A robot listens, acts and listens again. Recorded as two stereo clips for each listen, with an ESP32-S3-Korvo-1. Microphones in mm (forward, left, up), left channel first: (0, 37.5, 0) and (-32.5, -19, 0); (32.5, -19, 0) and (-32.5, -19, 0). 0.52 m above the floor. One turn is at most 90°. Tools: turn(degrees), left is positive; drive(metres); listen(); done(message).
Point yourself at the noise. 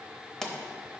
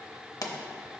turn(degrees=-20)
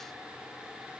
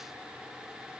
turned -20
done("I heard a pop from this way, but can't make it out now.")